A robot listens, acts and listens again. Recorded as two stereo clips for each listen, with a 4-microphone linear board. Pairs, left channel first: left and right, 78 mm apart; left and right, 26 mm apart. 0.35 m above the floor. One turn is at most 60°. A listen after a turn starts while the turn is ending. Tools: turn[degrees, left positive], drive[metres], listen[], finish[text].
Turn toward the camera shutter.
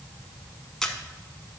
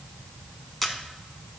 Action: turn[30]
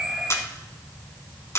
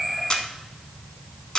Thought: So it is at 145° left.
Action: turn[60]
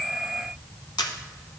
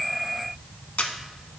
Thought: The camera shutter is now 75° left.
Action: turn[60]
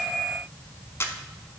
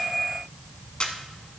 Thought: The camera shutter is now 35° left.
Action: turn[35]
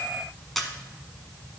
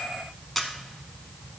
Action: finish[Facing the camera shutter, 1 to 2 m away.]